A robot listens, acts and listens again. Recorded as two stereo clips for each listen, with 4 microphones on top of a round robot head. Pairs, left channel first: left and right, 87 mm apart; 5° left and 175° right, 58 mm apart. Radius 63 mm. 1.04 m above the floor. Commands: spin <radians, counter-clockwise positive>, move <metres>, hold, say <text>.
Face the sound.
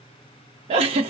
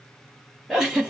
spin -1.66
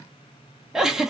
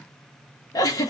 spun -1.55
say Facing the giggle.